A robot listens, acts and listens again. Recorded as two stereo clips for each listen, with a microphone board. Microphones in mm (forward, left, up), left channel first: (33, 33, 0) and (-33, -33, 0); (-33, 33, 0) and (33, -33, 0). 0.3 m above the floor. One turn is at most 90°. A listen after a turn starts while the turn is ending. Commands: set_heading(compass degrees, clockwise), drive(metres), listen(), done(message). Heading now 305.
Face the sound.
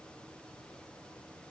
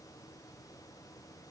listen()
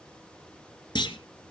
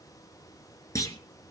set_heading(225)
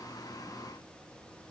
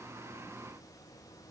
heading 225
done("I heard a clunk from this way, but can't make it out now.")